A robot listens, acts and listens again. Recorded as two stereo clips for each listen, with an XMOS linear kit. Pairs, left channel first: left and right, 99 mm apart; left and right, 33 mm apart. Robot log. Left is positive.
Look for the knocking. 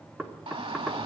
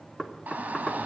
cmd yaw -30
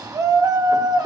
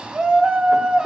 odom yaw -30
cmd idle
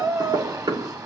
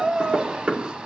note: So it is at 135° right.
cmd yaw -135
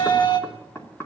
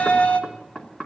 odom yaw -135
note: The knocking is now 25° left.
cmd yaw +25
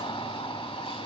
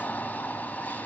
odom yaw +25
cmd idle
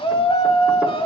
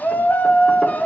cmd idle
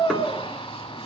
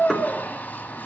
end: Found it: knocking, straight ahead, 2 to 4 m away.